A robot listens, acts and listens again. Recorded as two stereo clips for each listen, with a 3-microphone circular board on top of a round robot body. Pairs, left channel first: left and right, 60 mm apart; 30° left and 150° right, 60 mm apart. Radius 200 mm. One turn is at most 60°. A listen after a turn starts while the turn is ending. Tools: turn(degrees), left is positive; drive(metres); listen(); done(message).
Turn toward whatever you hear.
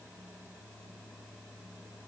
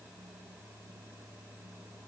listen()
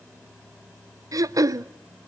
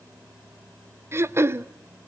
turn(degrees=-60)
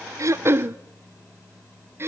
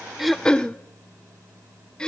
turn(degrees=-45)
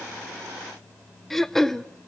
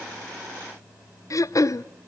done("Facing the throat clearing.")